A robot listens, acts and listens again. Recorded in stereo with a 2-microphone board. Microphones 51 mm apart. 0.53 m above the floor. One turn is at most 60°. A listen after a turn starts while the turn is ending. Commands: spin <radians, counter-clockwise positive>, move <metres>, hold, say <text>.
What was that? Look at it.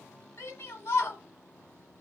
spin 1.05
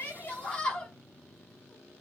spin 0.35
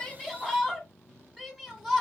spin -0.17
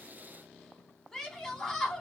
say Facing the shout, 1 to 2 m away.